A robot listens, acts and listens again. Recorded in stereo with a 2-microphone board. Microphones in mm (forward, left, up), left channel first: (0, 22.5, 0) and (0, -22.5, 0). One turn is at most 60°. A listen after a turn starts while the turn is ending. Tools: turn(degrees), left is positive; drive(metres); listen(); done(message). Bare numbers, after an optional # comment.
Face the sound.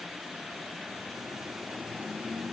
listen()
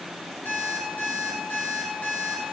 # The alarm clock: about 40° left or 140° left.
turn(40)
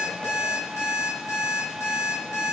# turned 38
# So it is at 100° left.
turn(60)
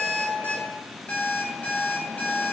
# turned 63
# The alarm clock is now 35° left.
turn(35)
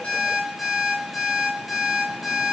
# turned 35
done("Facing the alarm clock, 1 to 2 m away.")